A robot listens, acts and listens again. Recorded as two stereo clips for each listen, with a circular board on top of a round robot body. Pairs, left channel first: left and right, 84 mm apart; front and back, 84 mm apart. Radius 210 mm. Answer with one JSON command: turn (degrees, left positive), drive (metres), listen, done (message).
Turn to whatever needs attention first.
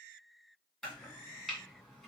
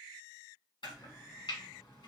{"listen": true}
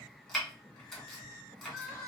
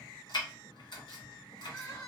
{"turn": -40}
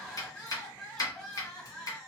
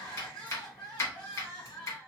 {"done": "Facing the crying, 2 to 4 m away."}